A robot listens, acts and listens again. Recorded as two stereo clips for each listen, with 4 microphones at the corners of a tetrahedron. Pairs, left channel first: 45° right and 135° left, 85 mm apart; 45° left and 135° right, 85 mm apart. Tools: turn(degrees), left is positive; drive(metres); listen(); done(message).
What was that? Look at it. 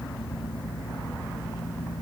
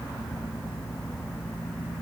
listen()
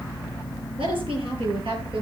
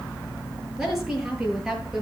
turn(degrees=135)
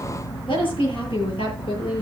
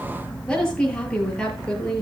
turn(degrees=-35)
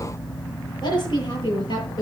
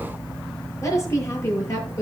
turn(degrees=-10)
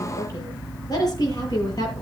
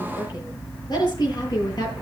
done("Found it: a woman speaking, straight ahead.")